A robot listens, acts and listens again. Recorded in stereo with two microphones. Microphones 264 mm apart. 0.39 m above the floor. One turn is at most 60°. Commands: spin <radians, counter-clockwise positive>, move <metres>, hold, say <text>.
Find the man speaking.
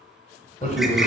spin 0.44
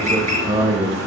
spin -0.44
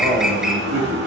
spin -0.52
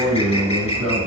spin -0.44
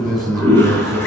say Found it: a man speaking, straight ahead, 2 to 4 m away.